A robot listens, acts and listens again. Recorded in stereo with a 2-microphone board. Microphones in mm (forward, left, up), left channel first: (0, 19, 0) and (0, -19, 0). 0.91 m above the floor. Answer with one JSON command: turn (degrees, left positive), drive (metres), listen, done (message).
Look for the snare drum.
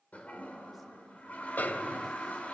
{"turn": 55}
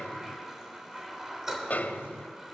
{"turn": 60}
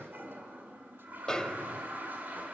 {"turn": 20}
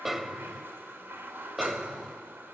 {"done": "Found it: a snare drum, straight ahead, 1 to 2 m away."}